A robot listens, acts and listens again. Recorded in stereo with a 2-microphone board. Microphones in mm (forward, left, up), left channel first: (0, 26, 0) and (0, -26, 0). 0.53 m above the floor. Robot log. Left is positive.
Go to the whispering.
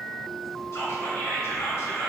note: The whispering: about 70° left or 110° left.
cmd yaw +70
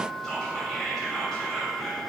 note: So it is at 10° left.
cmd yaw +10
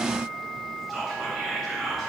cmd fwd 1.0
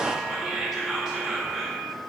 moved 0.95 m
note: The whispering is now 10° right.
cmd yaw -10
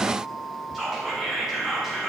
cmd fwd 1.0
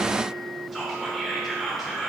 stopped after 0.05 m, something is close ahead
end: I am next to the whispering.